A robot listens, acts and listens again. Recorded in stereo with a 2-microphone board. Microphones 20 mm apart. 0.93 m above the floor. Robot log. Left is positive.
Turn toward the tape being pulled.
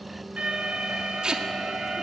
note: The tape being pulled: about 45° right or 135° right.
cmd yaw -45
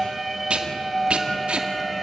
note: So it is at 85° right.
cmd yaw -85
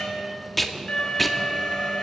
end: Found it: tape being pulled, straight ahead, 2 to 4 m away.